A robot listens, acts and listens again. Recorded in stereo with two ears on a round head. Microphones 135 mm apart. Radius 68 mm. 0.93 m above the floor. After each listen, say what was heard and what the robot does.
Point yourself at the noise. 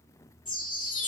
The chime: about 30° left or 150° left. Turn 30° left.
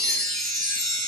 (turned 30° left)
Found it: a chime, straight ahead, under 1 m away.